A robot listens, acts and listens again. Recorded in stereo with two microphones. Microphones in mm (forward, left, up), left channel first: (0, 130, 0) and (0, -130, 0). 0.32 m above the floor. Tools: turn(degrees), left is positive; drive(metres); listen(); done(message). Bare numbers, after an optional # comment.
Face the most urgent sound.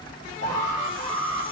# The alarm: about 75° right or 105° right.
turn(-75)
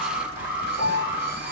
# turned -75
# So it is at 10° right.
turn(-10)
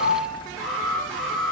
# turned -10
done("Facing the alarm, over 4 m away.")